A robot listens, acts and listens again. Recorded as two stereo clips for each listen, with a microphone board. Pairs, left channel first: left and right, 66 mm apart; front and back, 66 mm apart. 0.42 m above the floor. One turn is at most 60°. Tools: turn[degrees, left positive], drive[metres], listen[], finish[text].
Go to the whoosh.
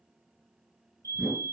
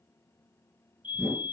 Thought: The whoosh: 160° right.
Action: turn[-60]
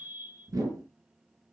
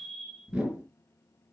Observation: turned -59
Thought: The whoosh is now 105° right.
Action: turn[-60]
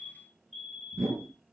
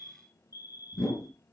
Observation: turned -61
Thought: The whoosh is now 40° right.
Action: turn[-40]
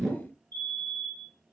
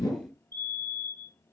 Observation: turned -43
Action: drive[1.0]
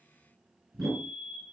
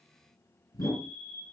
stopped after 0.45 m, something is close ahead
Action: finish[Something is in my way. I am facing the whoosh but have not reached it.]